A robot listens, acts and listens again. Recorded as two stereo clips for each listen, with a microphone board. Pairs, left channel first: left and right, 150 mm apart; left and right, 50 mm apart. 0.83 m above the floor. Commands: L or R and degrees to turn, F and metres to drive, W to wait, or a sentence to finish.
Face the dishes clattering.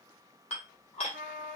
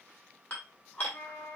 L45
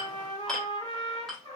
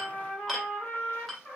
Facing the dishes clattering, 1 to 2 m away.